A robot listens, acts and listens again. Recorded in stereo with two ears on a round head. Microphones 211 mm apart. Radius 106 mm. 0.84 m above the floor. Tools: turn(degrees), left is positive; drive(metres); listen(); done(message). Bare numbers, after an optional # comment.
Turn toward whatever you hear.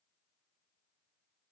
listen()
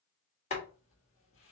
# The boiling: about 30° left or 150° left.
turn(30)
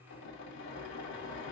# So it is at 120° left.
turn(120)
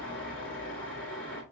done("Found it: boiling, straight ahead, 1 to 2 m away.")